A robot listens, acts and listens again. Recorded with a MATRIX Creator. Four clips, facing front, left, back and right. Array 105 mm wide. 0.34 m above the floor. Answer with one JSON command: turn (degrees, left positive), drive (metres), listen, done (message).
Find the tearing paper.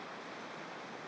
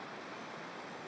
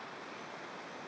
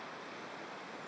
{"listen": true}
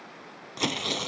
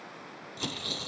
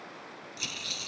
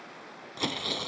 {"turn": -25}
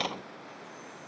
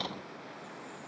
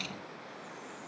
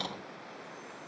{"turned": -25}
{"done": "Found it: tearing paper, straight ahead."}